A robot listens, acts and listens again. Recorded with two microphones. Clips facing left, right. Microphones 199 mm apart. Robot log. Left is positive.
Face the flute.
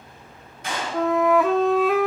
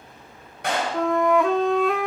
cmd yaw +30
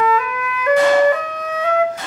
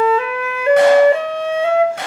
note: So it is at 30° right.
cmd yaw -30
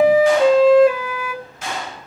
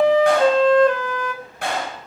note: The flute is now 10° left.
cmd yaw +10
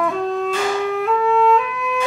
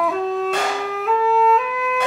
end: Found it: a flute, straight ahead, under 1 m away.